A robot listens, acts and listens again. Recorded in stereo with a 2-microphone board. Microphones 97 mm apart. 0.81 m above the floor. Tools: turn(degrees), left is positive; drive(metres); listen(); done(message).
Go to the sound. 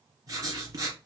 turn(degrees=-35)
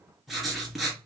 drive(metres=1.0)
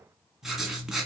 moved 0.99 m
drive(metres=1.0)
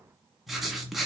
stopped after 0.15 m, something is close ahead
done("Arrived at the writing, straight ahead.")